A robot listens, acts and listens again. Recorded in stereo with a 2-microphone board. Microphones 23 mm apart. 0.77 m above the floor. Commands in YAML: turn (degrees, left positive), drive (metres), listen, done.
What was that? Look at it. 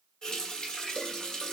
turn: 35
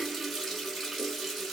done: "Found it: a running tap, straight ahead, 1 to 2 m away."